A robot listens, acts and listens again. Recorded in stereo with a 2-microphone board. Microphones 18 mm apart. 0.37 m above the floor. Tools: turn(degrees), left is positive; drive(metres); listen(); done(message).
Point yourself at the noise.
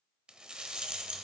turn(degrees=-55)
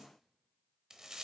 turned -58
turn(degrees=-40)
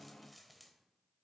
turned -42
listen()
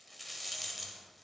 done("Found it: a rattle, straight ahead.")